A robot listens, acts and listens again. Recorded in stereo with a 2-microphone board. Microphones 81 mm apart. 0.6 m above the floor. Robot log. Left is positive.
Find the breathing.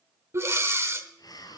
note: The breathing: about 35° right or 145° right.
cmd yaw -35
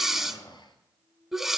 end: Facing the breathing.